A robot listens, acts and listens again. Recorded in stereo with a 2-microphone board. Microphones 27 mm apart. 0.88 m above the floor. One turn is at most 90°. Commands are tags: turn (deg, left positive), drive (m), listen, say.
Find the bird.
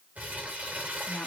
<listen/>
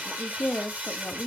<listen/>
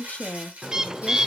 <turn deg="-30"/>
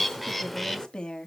<say>Facing the bird.</say>